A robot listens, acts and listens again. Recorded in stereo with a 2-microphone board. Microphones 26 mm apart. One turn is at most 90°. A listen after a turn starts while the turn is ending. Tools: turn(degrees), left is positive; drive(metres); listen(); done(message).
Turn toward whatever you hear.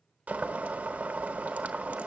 turn(degrees=-90)
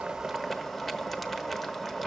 done("Found it: boiling, straight ahead.")